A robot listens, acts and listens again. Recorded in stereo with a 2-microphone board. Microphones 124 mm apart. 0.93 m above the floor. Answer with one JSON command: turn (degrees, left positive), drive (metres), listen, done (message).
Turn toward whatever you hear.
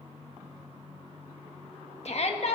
{"turn": 55}
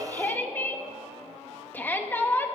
{"turn": 15}
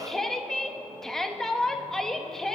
{"done": "Facing the shout."}